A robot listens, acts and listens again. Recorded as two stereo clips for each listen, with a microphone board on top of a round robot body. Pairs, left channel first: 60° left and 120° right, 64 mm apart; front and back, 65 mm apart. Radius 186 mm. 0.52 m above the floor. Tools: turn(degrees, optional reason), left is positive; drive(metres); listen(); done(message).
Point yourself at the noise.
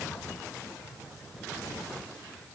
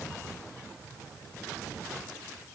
listen()
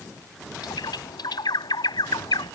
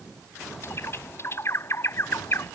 turn(degrees=50, reason="The bird: 50° left.")
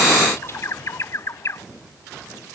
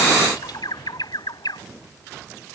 turn(degrees=10, reason="The bird is now 10° left.")
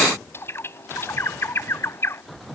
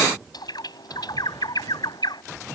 done("Facing the bird.")